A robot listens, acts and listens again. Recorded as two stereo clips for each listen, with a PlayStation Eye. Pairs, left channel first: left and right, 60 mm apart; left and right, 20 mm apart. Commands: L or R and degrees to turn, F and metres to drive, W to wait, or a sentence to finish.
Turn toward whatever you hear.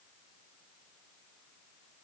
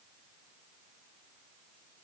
W
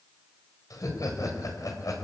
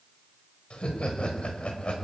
L90
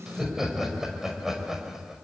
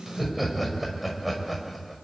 Facing the laughter.